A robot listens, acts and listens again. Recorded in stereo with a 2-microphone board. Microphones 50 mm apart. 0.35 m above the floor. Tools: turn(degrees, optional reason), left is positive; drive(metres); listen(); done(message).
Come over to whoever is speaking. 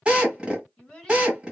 turn(degrees=30)
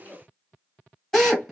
turn(degrees=135, reason="So it is at 135° left.")
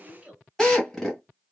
turn(degrees=-30, reason="The child speaking is now 30° right.")
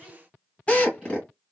listen()
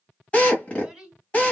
turn(degrees=-10, reason="The child speaking is now 10° right.")
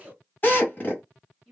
drive(metres=1.0)
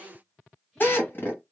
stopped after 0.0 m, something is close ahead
listen()
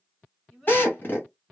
turn(degrees=10, reason="The child speaking is now 10° left.")
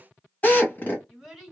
done("Something is in my way. I am facing the child speaking but have not reached it.")